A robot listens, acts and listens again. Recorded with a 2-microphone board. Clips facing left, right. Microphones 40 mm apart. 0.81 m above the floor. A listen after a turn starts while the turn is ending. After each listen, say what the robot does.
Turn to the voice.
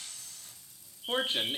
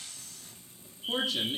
Turn 35° left.
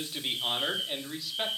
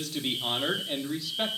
Facing the man speaking, 1 to 2 m away.